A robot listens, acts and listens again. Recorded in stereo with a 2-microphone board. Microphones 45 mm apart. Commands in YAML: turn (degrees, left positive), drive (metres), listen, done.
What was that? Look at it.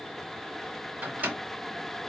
turn: -35
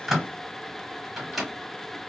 done: "Facing the microwave, 1 to 2 m away."